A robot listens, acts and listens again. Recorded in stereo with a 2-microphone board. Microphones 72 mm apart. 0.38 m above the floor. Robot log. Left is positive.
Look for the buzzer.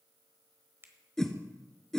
cmd idle
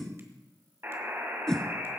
note: The buzzer: about 35° right or 145° right.
cmd yaw -35
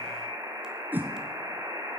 note: So it is at 110° right.
cmd yaw -110
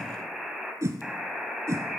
end: Facing the buzzer.